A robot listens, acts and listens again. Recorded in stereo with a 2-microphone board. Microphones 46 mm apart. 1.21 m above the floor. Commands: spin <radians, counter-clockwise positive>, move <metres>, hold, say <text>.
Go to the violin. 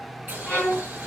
spin 0.52
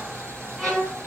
move 1.0
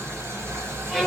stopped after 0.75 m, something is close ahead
spin 0.17
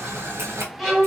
say I am next to the violin.